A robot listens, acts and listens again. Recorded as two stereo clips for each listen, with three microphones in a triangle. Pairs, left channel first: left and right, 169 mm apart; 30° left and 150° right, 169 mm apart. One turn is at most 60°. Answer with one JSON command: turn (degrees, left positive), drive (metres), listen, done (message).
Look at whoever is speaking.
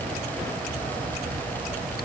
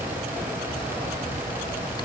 {"listen": true}
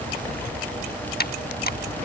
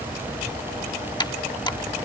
{"listen": true}
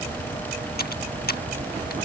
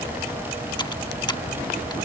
{"done": "I can't make out anyone speaking to turn to."}